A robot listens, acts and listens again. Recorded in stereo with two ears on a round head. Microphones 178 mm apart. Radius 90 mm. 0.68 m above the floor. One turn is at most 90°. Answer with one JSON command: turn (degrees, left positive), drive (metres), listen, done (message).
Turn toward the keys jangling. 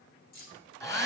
{"turn": 45}
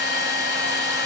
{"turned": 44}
{"listen": true}
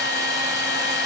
{"listen": true}
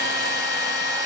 {"done": "I heard keys jangling, but can't make it out now. It was about straight ahead or 90° left."}